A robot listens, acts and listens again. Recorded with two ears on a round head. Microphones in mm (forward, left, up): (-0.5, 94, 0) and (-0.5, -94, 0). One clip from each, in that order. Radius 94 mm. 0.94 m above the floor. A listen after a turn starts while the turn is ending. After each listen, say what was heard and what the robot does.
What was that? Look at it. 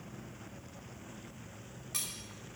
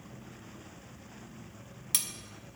Turn 90° right.
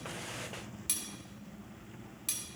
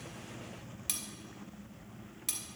Found it: cutlery clinking, straight ahead.